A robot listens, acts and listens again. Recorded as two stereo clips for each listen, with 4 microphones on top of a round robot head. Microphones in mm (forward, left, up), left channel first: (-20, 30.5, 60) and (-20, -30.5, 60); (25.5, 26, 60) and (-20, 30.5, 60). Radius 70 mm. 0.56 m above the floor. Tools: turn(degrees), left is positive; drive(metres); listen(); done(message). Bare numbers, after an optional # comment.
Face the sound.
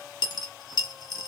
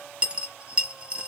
# The dropped coin: 105° left.
turn(105)
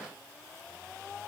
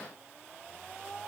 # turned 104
done("Facing where the dropped coin came from. I can't hear it now.")